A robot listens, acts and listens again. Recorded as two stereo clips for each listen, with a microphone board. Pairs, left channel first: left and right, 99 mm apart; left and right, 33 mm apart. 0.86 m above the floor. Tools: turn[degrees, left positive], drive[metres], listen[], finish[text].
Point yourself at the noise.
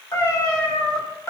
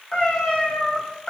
Thought: The cat meowing: about 30° left or 150° left.
Action: turn[30]
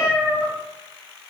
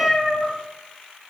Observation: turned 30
Thought: So it is at 15° right.
Action: turn[-15]
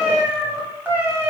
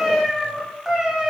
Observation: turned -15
Thought: The cat meowing is now 20° right.
Action: turn[-20]
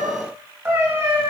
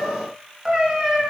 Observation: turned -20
Thought: The cat meowing is now 30° right.
Action: turn[-30]
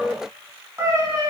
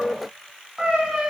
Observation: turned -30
Thought: The cat meowing is now 30° right.
Action: turn[-30]
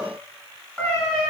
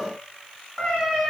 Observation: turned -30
Thought: The cat meowing is now 10° left.
Action: turn[10]
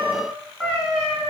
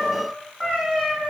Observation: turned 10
Action: finish[Found it: a cat meowing, straight ahead, 1 to 2 m away.]